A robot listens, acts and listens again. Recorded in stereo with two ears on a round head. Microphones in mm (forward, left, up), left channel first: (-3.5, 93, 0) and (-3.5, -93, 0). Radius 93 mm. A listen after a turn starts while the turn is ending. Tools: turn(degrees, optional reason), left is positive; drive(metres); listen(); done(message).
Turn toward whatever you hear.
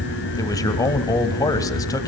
turn(degrees=15, reason="The man speaking: about 15° left or 165° left.")
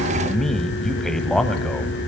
done("Found it: a man speaking, straight ahead.")